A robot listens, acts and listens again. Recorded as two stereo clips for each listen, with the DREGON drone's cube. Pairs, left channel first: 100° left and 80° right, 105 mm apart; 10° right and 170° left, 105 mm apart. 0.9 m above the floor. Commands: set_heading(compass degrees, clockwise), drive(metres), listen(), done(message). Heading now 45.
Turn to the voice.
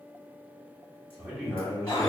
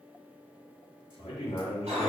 set_heading(55)
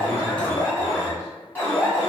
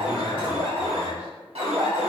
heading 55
listen()
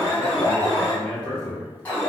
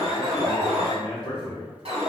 done("Found it: a man speaking, straight ahead, 1 to 2 m away.")